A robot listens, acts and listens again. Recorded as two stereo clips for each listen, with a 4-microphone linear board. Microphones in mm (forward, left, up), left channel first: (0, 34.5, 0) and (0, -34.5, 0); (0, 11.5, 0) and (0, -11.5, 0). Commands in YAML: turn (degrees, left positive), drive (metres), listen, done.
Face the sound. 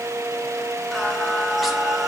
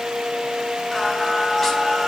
turn: -30
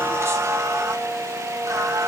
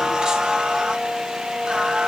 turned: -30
turn: -130
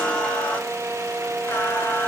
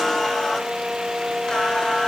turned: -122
turn: 30
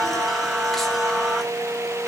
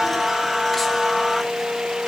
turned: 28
done: "Facing the singing, 2 to 4 m away."